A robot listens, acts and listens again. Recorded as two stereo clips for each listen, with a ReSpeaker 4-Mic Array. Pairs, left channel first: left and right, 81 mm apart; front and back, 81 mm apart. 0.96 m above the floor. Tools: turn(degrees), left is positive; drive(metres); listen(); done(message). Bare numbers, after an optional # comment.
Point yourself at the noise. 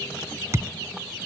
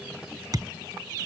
# The thud: 145° right.
turn(-145)
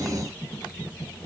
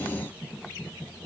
done("Facing where the thud came from. I can't hear it now.")